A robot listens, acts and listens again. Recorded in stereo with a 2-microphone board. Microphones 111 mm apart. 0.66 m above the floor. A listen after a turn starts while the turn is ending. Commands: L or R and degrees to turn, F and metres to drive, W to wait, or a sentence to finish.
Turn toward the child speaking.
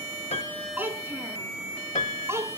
R25
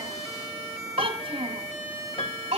R115
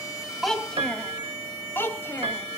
L20
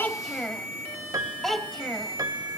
Found it: a child speaking, straight ahead.